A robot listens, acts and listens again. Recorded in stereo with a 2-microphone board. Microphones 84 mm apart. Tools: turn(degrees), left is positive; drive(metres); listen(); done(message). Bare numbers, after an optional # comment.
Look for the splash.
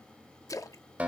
# The splash: about 40° left or 140° left.
turn(40)
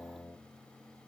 listen()
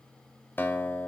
done("I heard a splash, but can't make it out now. It was about straight ahead or 100° left.")